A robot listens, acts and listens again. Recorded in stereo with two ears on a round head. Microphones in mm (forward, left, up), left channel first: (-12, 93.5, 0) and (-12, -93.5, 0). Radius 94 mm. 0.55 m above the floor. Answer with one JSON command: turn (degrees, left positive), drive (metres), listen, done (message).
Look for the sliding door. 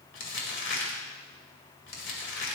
{"listen": true}
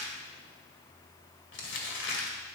{"listen": true}
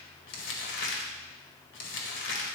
{"done": "I can't make out a sliding door to turn to."}